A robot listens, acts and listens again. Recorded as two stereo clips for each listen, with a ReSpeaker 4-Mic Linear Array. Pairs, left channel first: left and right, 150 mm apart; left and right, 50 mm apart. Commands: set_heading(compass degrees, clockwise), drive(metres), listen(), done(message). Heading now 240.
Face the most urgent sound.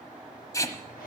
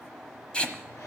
listen()
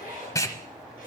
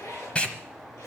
listen()
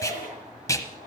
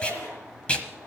done("I can't make out anything urgent to turn to.")